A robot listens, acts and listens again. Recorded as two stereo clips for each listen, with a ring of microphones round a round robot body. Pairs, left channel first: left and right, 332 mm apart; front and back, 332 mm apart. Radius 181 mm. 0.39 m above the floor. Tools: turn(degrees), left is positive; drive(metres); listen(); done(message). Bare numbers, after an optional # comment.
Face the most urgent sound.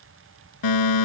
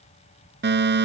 # The fire alarm: 120° left.
turn(120)
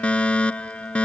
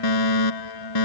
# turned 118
done("Found it: a fire alarm, straight ahead.")